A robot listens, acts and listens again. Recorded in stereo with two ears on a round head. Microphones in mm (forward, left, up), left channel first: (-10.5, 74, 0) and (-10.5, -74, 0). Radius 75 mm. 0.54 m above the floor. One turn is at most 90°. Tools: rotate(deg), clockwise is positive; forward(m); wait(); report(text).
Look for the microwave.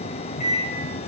rotate(-45)
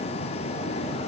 wait()
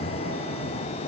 wait()
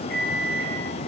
rotate(-85)
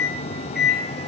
report("Facing the microwave.")